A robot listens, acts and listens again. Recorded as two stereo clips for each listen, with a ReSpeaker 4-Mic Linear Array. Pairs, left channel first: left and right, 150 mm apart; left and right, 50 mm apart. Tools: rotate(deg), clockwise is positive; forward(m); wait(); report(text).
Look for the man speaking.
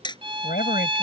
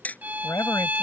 rotate(-90)
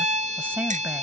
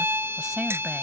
rotate(10)
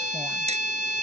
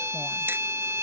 wait()
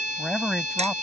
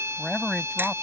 report("Found it: a man speaking, straight ahead.")